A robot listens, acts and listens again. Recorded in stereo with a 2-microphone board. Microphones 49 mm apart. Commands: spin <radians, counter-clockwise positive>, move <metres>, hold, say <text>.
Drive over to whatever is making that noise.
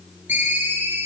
spin -0.70
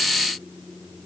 hold
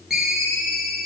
move 1.0
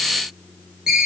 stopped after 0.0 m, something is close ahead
spin -0.17
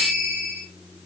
say Something is in my way. I am facing the ringtone but have not reached it.